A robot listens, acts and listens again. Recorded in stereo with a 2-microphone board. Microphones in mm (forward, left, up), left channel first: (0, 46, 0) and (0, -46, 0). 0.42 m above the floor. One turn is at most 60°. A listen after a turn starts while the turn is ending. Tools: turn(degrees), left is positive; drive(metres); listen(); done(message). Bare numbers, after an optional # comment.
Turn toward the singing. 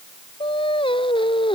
# The singing: about 70° left or 110° left.
turn(60)
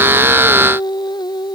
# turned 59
# So it is at 55° left.
turn(55)
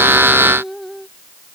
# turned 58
done("Facing the singing.")